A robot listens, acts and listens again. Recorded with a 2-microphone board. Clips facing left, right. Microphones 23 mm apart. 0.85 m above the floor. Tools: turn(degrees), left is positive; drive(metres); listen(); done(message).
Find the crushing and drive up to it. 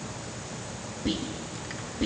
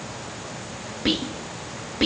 listen()
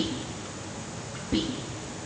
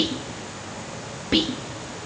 listen()
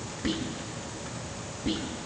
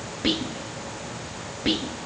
done("I can't make out crushing to turn to.")